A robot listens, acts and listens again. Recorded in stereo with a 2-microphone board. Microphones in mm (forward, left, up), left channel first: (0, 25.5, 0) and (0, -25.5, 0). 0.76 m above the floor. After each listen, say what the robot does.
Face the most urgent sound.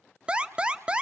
Turn 20° right.
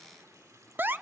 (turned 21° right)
Turn 135° right.
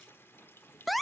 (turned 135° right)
Facing the alarm, under 1 m away.